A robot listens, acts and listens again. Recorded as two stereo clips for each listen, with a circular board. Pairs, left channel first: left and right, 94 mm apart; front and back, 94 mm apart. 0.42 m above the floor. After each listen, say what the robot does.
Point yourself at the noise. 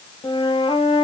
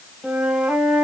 Turn 95° left.
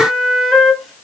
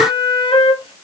Facing the flute, under 1 m away.